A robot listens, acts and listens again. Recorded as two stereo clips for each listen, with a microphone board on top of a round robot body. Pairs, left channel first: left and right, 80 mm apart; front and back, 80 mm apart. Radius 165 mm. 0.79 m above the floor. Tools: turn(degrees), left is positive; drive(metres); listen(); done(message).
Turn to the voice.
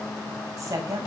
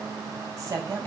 turn(degrees=-135)
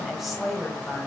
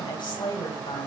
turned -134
done("Found it: a woman speaking, straight ahead.")